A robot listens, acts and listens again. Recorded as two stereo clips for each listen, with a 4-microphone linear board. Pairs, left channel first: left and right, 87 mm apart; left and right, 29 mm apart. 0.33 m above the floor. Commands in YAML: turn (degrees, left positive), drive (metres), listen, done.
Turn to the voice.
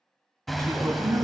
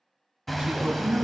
turn: -40
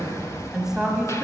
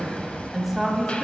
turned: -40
done: "Facing the woman speaking, 1 to 2 m away."